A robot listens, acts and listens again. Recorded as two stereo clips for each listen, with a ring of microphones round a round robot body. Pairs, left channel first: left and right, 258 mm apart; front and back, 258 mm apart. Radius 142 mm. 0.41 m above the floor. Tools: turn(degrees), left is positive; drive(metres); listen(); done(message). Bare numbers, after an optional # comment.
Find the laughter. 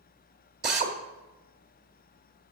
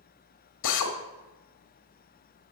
listen()
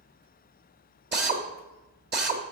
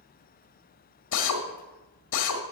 listen()
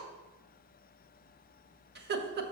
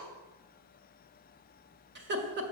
# The laughter: 135° right.
turn(-135)
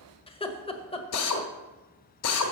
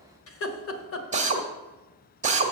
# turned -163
# The laughter is now 25° left.
turn(25)
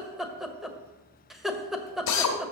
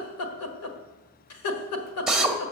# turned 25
done("Found it: laughter, straight ahead.")